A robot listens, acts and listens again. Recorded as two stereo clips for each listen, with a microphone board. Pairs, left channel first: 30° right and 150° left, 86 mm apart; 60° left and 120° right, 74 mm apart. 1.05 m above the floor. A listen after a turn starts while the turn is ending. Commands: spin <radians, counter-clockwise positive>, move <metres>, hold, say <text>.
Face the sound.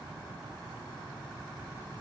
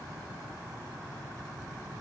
hold
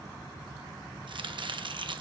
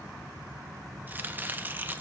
spin 3.05
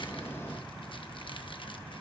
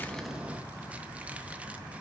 hold
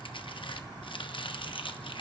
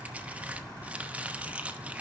spin -0.87
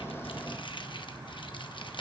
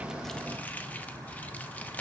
spin -0.17
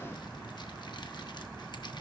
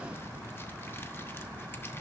hold
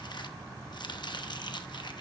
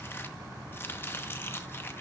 say Facing the chopping.